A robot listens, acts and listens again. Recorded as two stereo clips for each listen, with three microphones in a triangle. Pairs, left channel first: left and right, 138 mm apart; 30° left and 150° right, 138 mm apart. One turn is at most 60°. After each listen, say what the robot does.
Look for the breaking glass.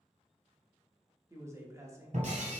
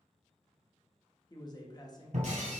Turn 60° right.
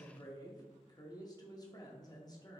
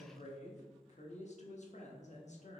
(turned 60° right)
Turn 60° right.
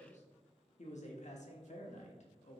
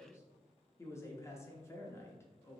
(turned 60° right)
Facing where the breaking glass came from. I can't hear it now.